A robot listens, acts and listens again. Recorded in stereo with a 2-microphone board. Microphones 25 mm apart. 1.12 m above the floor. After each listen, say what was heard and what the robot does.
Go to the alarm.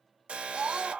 The alarm: about 60° right or 120° right. Turn 60° right.
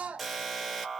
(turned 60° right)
Drive 1.0 m forward.
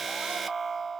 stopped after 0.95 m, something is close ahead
I am next to the alarm.